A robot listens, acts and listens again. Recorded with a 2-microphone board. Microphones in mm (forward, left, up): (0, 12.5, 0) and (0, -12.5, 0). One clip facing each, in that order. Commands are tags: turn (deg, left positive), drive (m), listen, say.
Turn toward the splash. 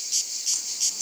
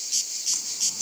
<listen/>
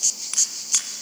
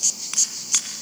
<listen/>
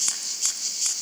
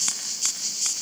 <say>I can't make out a splash.</say>